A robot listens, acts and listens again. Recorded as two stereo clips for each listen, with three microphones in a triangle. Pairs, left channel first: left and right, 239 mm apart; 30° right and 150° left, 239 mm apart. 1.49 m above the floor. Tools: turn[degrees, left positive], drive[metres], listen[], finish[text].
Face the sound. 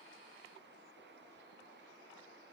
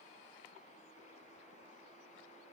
Action: listen[]
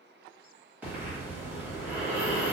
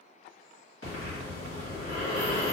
Action: finish[Facing the breathing.]